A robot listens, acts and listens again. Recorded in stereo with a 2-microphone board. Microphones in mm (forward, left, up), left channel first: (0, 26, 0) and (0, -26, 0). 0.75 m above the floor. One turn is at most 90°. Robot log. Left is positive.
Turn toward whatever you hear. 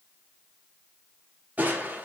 note: The crushing: about 35° right or 145° right.
cmd yaw -35
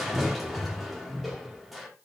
end: Found it: crushing, straight ahead, 1 to 2 m away.